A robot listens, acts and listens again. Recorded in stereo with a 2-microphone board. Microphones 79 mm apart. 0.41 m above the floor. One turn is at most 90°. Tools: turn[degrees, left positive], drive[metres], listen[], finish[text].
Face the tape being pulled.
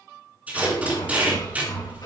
Thought: The tape being pulled: about 20° right or 160° right.
Action: turn[-20]
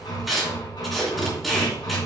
Action: finish[Found it: tape being pulled, straight ahead.]